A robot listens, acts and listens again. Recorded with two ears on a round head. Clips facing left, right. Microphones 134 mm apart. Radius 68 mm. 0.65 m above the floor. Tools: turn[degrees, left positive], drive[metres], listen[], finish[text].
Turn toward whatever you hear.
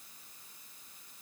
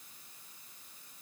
Action: listen[]
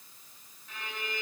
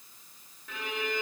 Thought: The violin: about 55° right or 125° right.
Action: turn[-55]
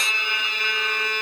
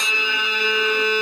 Thought: So it is at 70° right.
Action: turn[-70]
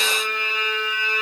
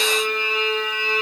Thought: The violin is now 20° right.
Action: turn[-20]
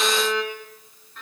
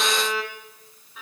Action: finish[Facing the violin.]